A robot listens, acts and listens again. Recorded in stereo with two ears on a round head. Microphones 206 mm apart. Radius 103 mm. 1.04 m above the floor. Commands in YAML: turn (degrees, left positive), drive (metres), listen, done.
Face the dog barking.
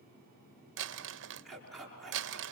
turn: 30
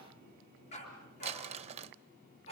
turn: 150
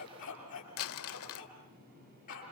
turn: 35
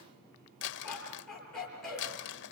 done: "Found it: a dog barking, straight ahead."